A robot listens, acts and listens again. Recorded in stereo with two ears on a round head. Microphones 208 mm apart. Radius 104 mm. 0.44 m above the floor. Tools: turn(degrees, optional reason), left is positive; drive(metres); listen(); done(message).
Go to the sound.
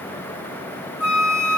turn(degrees=70, reason="The flute: about 70° left or 110° left.")
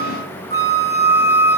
turn(degrees=15, reason="So it is at 15° left.")
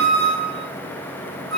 drive(metres=1.0)
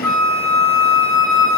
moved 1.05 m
drive(metres=1.0)
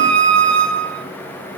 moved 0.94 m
drive(metres=1.0)
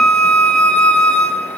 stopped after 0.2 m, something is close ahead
done("Arrived at the flute, straight ahead.")